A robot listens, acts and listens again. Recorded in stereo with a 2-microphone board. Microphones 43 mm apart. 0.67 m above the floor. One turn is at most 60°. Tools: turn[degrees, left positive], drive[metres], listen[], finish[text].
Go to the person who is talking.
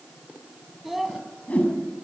Action: turn[-30]
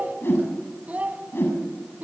Thought: So it is at 140° right.
Action: turn[-60]
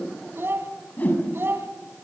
Thought: The child speaking is now 75° right.
Action: turn[-60]
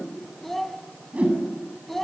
Action: drive[1.0]
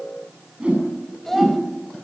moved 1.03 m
Action: drive[1.0]
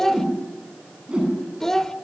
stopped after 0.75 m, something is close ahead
Thought: The child speaking is now 10° left.
Action: turn[10]
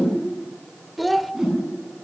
Action: finish[I am next to the child speaking.]